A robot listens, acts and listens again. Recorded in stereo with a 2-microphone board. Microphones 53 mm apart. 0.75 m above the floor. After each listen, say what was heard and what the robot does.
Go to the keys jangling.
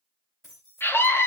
Turn 30° right.
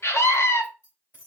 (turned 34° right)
So it is at 30° left. Turn 30° left.
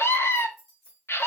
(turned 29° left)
Drive 1.0 m forward.
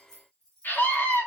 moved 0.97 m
The keys jangling is now 10° left. Turn 10° left.
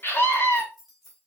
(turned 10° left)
Drive 1.0 m forward.
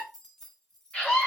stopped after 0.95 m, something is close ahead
The keys jangling is now 10° left. Turn 10° left.
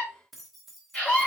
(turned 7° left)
I am next to the keys jangling.